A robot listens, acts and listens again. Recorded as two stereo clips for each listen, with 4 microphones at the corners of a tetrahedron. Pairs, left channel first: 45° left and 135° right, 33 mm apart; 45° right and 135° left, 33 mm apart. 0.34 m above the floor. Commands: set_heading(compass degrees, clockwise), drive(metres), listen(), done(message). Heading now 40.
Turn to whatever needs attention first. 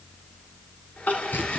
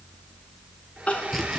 set_heading(30)
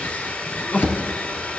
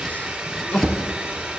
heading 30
done("Found it: crying, straight ahead, 2 to 4 m away.")